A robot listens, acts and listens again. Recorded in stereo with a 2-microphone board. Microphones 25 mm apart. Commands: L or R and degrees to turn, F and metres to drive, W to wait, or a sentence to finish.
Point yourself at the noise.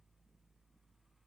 W
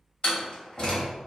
L40
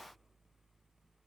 W
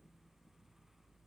I heard a door slam, but can't make it out now. It was about straight ahead or 100° left.